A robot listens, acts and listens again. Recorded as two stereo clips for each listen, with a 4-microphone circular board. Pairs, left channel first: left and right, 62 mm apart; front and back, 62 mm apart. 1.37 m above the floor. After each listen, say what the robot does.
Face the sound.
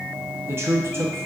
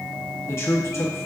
Turn 45° right.
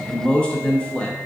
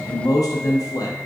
Turn 15° left.
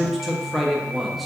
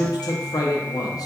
Facing the man speaking, under 1 m away.